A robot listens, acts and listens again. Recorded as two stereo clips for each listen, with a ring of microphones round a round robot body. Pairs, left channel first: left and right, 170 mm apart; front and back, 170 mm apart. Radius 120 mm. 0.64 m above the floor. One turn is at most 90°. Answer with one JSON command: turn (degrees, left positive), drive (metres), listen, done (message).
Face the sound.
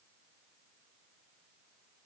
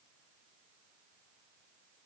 {"listen": true}
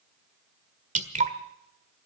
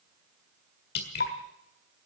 {"turn": -45}
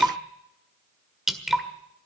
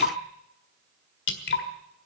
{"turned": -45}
{"done": "Found it: dripping, straight ahead, 1 to 2 m away."}